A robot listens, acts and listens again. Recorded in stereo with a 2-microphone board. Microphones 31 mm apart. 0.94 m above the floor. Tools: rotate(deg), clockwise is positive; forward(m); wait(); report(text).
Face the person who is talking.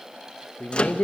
rotate(-70)
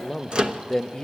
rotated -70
rotate(-25)
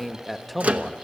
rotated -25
report("Found it: a man speaking, straight ahead.")